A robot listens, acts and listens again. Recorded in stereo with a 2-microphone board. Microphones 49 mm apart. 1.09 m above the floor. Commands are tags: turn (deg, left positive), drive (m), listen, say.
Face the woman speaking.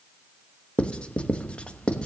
<listen/>
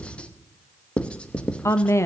<turn deg="65"/>
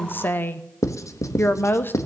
<turn deg="45"/>
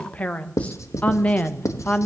<turn deg="30"/>
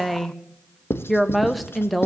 <say>Facing the woman speaking, 1 to 2 m away.</say>